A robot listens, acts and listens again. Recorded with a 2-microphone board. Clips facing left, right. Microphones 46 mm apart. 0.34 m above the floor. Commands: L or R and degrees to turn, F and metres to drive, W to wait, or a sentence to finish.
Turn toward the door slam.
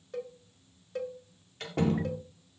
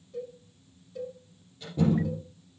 L75
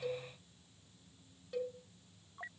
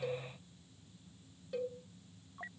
W
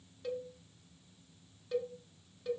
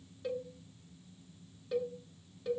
I heard a door slam, but can't make it out now. It was about straight ahead or 30° left.